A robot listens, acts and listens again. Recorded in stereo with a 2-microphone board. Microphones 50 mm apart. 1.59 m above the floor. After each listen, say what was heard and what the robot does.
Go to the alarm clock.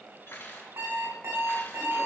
The alarm clock: about 75° right or 105° right. Turn 75° right.
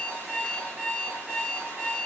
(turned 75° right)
So it is at 20° right. Turn 20° right.
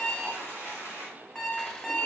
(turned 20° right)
Drive 1.0 m forward.
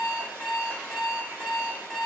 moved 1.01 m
Drive 1.0 m forward.
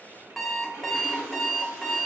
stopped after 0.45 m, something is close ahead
I am next to the alarm clock.